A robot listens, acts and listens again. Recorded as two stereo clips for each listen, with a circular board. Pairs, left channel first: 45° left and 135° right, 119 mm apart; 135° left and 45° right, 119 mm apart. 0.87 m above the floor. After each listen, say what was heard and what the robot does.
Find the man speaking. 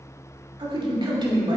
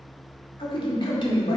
The man speaking: 175° left. Turn 175° left.
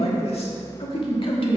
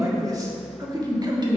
Found it: a man speaking, straight ahead, 1 to 2 m away.